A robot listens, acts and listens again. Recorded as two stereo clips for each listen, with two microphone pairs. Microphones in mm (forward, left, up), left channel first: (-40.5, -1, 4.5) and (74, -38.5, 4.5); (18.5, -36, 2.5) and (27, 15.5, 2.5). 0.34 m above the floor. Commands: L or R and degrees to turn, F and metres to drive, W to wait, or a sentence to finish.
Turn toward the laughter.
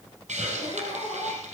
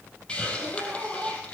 R155
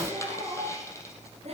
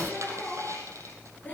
R40
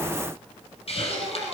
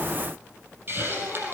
W
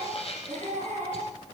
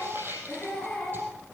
R25
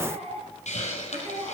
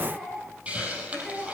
Facing the laughter.